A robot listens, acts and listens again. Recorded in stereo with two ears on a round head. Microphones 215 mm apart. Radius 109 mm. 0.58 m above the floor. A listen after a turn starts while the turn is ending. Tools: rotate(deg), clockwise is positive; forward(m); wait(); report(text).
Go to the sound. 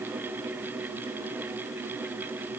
wait()
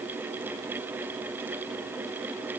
wait()
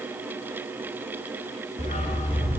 rotate(-30)
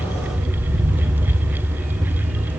forward(1.0)
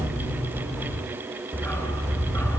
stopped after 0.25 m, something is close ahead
rotate(-10)
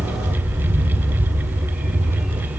report("Something is in my way. I am facing the dog barking but have not reached it.")